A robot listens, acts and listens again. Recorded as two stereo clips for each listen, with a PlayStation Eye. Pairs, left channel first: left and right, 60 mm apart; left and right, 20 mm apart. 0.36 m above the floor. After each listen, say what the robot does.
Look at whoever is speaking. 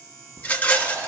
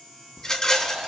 Keep listening.
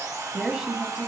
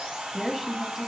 Turn 30° right.
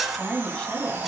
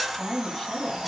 Turn 15° left.
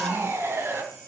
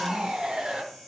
Keep listening.
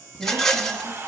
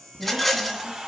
Keep listening.
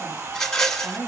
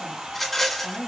Found it: a woman speaking, straight ahead.